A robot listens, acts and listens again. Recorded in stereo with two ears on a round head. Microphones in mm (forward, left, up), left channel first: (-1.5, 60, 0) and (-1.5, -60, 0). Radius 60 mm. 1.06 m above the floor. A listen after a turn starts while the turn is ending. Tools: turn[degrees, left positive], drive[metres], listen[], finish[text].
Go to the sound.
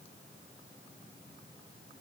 Action: listen[]
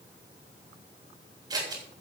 Thought: The scissors: about 30° right or 150° right.
Action: turn[-30]
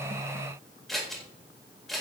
Action: drive[1.0]
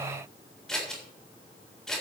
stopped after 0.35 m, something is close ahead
Action: finish[Blocked. The scissors is further on, straight ahead.]